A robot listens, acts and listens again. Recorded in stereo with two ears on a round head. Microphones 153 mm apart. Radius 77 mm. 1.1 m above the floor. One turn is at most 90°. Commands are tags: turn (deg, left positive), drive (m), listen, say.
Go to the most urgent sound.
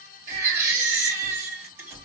<turn deg="-20"/>
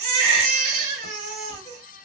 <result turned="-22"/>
<turn deg="-90"/>
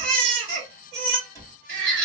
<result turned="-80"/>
<turn deg="-55"/>
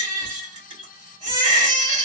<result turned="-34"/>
<turn deg="-25"/>
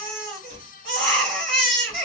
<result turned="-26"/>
<drive m="1.0"/>
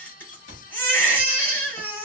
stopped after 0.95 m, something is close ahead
<turn deg="10"/>
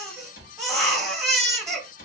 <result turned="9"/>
<say>Arrived at the baby crying, straight ahead.</say>